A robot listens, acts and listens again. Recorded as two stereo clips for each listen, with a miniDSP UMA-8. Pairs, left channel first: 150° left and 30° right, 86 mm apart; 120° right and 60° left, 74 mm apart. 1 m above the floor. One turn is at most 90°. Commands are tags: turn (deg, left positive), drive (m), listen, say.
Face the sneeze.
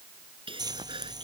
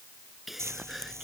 <turn deg="-25"/>
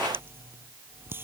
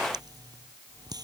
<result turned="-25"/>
<say>Facing where the sneeze came from. I can't hear it now.</say>